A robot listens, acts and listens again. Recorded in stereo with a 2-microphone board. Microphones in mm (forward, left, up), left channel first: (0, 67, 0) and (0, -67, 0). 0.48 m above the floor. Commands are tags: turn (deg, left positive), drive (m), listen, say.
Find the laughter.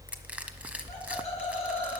<turn deg="55"/>
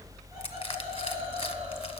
<listen/>
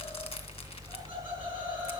<turn deg="-15"/>
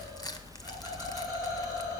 <say>Found it: laughter, straight ahead.</say>